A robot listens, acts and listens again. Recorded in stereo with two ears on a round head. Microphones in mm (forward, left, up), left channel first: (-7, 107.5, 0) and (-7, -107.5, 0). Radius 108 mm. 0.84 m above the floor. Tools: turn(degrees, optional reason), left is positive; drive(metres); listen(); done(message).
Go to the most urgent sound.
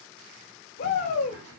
turn(degrees=45, reason="The shout: about 45° left or 135° left.")
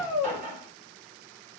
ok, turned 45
drive(metres=1.0)
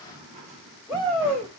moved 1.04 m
drive(metres=1.0)
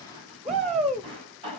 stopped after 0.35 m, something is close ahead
done("I am next to the shout.")